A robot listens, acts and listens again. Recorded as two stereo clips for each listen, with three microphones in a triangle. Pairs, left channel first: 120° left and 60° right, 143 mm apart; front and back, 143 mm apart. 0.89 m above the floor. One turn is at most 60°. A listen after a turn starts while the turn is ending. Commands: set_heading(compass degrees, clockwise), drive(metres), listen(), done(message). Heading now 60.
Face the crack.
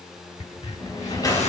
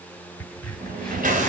set_heading(0)
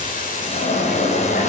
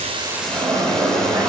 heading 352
set_heading(337)
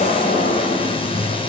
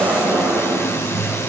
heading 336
done("I heard a crack from this way, but can't make it out now.")